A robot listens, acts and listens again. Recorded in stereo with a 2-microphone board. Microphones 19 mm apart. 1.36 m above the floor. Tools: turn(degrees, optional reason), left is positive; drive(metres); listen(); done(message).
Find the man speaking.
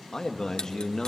turn(degrees=30, reason="The man speaking: about 30° left or 150° left.")
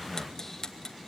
turn(degrees=10, reason="So it is at 10° left.")
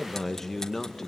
turn(degrees=20, reason="The man speaking is now 20° left.")
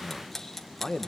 turn(degrees=20, reason="The man speaking is now 20° left.")
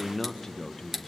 turn(degrees=20, reason="The man speaking is now 20° left.")
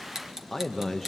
turn(degrees=10, reason="The man speaking is now 10° left.")
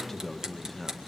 done("Found it: a man speaking, straight ahead, 1 to 2 m away.")